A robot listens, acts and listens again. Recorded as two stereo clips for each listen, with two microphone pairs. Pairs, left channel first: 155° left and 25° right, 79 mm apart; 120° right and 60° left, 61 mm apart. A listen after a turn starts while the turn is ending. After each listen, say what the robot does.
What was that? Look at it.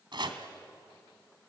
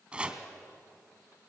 Turn 10° right.
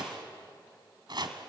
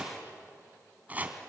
Found it: chopping, straight ahead.